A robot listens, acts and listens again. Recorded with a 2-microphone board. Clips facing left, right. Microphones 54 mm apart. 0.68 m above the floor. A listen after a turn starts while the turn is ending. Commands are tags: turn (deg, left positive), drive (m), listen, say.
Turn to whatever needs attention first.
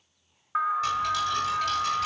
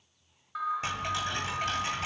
<turn deg="45"/>
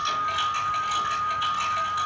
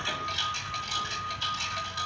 <turn deg="90"/>
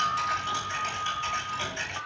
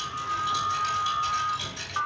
<turn deg="-35"/>
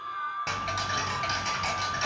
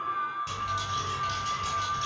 <say>Found it: an alarm, straight ahead, 2 to 4 m away.</say>